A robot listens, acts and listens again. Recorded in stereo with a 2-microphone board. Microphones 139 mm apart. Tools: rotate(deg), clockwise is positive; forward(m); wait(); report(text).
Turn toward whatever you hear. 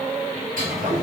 rotate(90)
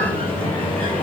rotate(-10)
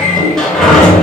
report("Found it: a sliding door, straight ahead.")